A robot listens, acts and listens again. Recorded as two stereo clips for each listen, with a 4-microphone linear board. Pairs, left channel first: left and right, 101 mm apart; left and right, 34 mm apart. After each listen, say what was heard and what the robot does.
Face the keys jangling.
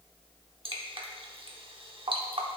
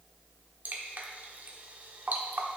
Keep listening.
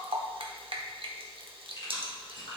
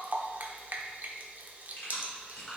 The keys jangling: about 50° left or 130° left. Turn 50° left.
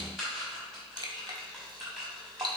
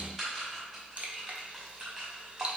Facing the keys jangling, over 4 m away.